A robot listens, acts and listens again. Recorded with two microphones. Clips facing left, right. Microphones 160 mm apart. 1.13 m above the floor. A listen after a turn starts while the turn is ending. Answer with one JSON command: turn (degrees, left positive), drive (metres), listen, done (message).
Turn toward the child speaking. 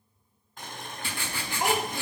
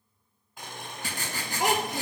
{"turn": -75}
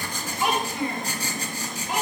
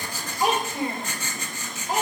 {"turn": -40}
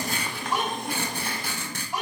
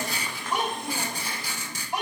{"turn": -20}
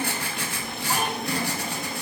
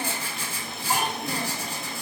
{"listen": true}
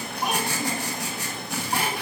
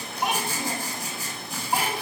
{"done": "Found it: a child speaking, straight ahead."}